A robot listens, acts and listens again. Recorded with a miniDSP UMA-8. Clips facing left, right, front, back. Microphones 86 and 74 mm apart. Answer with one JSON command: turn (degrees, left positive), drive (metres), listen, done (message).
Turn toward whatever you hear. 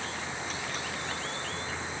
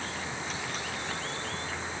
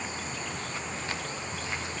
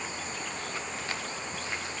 {"listen": true}
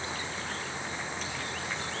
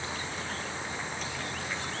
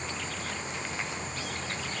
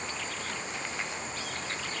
{"listen": true}
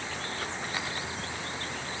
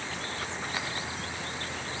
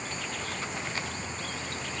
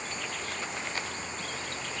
{"done": "I can't make out anything."}